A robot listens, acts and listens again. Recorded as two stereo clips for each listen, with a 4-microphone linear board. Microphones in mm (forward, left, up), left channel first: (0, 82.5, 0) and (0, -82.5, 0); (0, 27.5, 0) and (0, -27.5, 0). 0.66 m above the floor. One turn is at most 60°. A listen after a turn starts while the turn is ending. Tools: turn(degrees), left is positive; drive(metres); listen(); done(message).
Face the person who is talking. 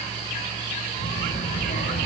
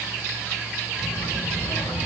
turn(degrees=60)
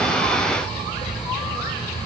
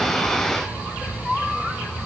turn(degrees=35)
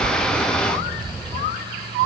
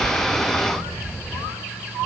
done("Found it: a child speaking, straight ahead, 2 to 4 m away.")